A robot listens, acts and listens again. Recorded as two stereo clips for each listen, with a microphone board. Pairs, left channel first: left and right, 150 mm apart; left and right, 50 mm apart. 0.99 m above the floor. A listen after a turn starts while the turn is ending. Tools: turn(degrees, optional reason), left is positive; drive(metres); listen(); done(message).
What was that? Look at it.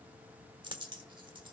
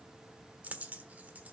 turn(degrees=-30, reason="The dropped coin: about 30° right or 150° right.")
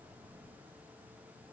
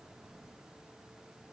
listen()
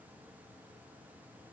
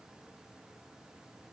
done("I heard a dropped coin, but can't make it out now. It was about straight ahead or 120° right.")